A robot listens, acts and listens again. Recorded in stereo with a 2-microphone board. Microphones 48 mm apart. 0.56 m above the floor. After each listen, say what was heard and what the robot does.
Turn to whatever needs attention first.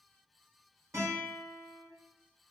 Keep listening.
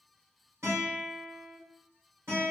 Keep listening.
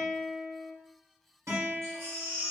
The baby crying: about 60° right or 120° right. Turn 60° right.
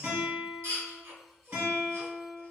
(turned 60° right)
So it is at 65° right. Turn 65° right.
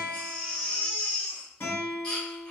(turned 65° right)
The baby crying is now 20° left. Turn 20° left.
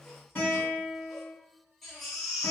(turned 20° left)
Facing the baby crying.